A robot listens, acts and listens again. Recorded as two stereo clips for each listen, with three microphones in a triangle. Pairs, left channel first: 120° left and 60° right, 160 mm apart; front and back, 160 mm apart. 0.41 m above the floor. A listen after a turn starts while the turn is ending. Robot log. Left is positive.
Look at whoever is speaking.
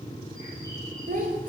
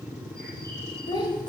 note: The child speaking: 55° right.
cmd yaw -55
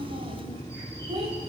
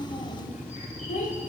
note: The child speaking is now 15° right.
cmd yaw -15
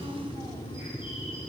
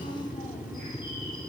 cmd idle
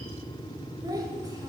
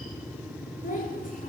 end: Found it: a child speaking, straight ahead, 1 to 2 m away.